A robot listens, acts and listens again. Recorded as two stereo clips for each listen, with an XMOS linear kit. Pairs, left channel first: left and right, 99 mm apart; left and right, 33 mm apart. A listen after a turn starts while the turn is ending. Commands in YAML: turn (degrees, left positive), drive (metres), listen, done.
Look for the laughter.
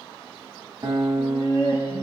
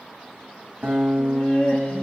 turn: 60
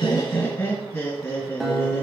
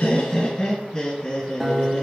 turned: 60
turn: 30
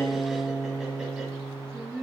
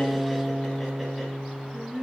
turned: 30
done: "Found it: laughter, straight ahead."